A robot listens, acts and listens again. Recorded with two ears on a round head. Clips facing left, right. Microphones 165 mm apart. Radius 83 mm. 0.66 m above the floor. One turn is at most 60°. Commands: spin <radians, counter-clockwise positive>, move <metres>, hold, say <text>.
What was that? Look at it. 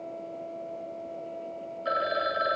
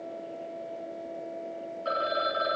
spin 0.52
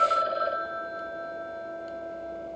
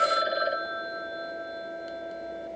spin -0.26
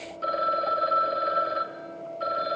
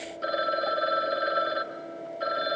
spin -0.17
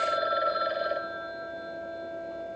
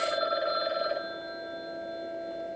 say Facing the phone ringing.